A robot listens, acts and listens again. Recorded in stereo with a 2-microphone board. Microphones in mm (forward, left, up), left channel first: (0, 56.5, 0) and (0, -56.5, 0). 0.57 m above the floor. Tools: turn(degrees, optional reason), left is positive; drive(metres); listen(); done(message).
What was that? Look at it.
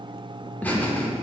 turn(degrees=30)
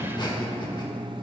turn(degrees=130, reason="So it is at 130° left.")
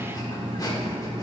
turn(degrees=40, reason="The laughter is now 40° left.")
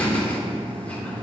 turn(degrees=15, reason="The laughter is now 15° left.")
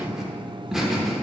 done("Found it: laughter, straight ahead.")